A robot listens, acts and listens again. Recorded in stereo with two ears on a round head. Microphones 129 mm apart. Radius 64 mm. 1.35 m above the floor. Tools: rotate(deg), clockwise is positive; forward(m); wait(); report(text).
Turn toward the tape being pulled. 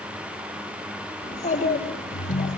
wait()
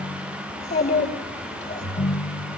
wait()
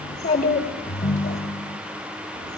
report("I can't make out tape being pulled to turn to.")